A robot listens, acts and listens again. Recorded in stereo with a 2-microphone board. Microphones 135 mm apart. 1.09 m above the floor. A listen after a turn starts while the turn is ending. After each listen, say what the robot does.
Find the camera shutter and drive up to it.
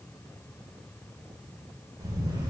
Turn 35° right.
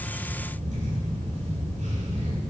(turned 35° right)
Turn 110° right.
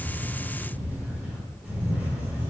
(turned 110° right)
Turn 10° right.
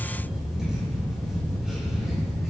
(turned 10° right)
Drive 1.0 m forward.
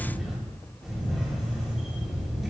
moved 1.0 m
Drive 1.0 m forward.
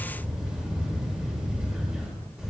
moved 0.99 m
Drive 1.0 m forward.
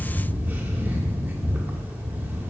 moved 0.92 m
Turn 15° right.
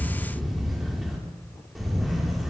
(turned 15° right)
Drive 1.0 m forward.
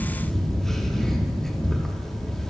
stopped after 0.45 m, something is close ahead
I am next to the camera shutter.